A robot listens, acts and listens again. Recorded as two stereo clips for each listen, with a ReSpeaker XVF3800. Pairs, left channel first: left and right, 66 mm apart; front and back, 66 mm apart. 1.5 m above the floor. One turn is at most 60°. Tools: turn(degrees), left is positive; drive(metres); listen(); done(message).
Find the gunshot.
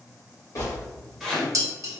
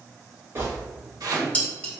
turn(degrees=60)
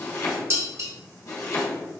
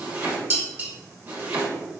turn(degrees=60)
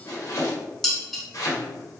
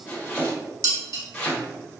done("I heard a gunshot from this way, but can't make it out now.")